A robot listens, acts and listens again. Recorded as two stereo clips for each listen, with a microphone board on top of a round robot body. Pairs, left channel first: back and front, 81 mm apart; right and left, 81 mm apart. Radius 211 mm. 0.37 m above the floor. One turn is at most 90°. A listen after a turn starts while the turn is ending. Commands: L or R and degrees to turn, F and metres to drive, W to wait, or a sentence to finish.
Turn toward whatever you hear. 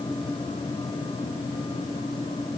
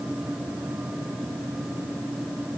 W
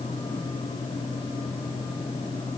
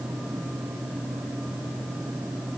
W
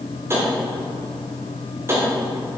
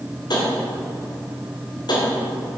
R60
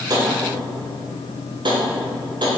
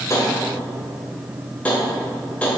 R15
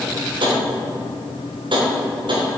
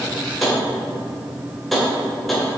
Facing the tapping.